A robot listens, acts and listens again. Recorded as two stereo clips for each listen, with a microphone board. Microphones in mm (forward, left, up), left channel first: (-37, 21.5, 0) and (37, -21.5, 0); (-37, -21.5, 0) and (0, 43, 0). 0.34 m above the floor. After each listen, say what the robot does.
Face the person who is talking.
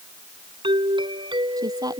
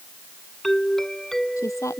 Turn 75° right.
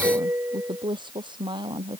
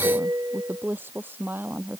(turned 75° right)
Facing the woman speaking.